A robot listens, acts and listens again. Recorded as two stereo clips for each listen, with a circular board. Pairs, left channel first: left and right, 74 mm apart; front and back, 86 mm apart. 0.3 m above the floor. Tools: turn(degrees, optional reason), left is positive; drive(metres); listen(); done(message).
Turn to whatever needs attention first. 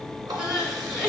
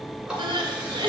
turn(degrees=-170, reason="The crying: 170° right.")
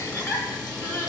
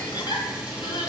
turn(degrees=35, reason="The crying is now 35° left.")
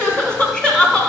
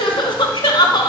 turn(degrees=15, reason="The crying is now 15° left.")
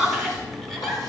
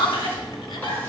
done("Facing the crying.")